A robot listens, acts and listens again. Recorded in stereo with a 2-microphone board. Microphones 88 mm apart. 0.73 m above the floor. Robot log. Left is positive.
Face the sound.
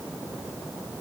cmd idle
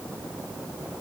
cmd idle
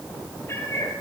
note: The cat meowing: about 30° left or 150° left.
cmd yaw +30
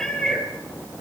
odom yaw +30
end: Found it: a cat meowing, straight ahead, over 4 m away.